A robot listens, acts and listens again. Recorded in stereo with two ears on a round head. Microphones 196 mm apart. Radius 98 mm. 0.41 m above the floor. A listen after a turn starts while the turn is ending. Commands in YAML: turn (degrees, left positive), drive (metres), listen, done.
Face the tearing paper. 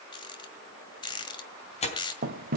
turn: 30
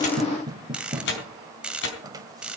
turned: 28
turn: 120
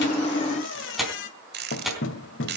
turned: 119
done: "Found it: tearing paper, straight ahead, over 4 m away."